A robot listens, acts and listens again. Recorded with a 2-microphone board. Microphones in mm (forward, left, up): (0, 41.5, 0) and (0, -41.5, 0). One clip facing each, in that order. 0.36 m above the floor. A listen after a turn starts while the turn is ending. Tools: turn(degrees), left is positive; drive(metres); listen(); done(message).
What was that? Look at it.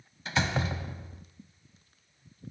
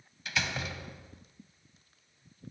turn(degrees=35)
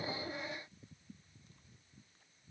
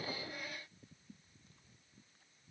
listen()
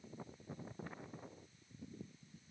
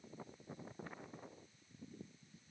done("I heard a door slam, but can't make it out now. It was about straight ahead or 110° left.")